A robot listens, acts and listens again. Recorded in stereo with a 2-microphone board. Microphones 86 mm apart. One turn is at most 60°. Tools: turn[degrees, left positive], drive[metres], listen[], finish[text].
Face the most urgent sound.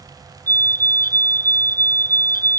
Thought: The fire alarm: about 30° left or 150° left.
Action: turn[30]
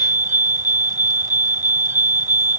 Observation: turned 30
Thought: So it is at 125° left.
Action: turn[60]
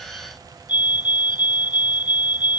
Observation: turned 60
Thought: The fire alarm is now 70° left.
Action: turn[60]
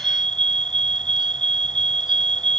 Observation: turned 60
Thought: The fire alarm is now 10° left.
Action: turn[10]
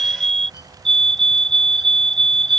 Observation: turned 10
Action: finish[Facing the fire alarm.]